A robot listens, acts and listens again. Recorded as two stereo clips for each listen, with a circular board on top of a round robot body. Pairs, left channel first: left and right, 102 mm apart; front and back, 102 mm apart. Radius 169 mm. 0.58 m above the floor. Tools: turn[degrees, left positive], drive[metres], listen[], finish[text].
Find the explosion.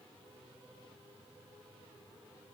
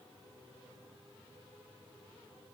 Action: listen[]
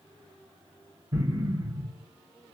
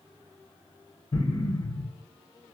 Thought: The explosion: 35° right.
Action: turn[-35]
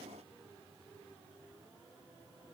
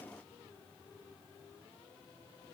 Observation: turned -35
Action: finish[I heard an explosion from this way, but can't make it out now.]